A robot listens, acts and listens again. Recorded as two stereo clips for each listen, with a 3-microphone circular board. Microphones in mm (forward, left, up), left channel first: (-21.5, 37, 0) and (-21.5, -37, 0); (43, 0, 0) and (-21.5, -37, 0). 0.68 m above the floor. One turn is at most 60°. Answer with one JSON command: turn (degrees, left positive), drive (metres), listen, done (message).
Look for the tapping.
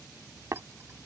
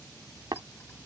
{"turn": -60}
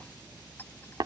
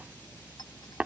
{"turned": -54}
{"turn": -60}
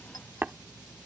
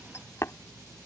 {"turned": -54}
{"turn": -25}
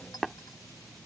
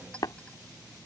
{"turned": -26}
{"done": "Found it: tapping, straight ahead."}